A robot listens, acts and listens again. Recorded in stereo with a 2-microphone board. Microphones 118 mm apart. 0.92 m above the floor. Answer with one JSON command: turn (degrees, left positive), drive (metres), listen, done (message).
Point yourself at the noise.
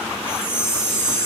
{"turn": 50}
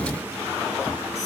{"listen": true}
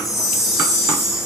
{"done": "Found it: a chime, straight ahead, over 4 m away."}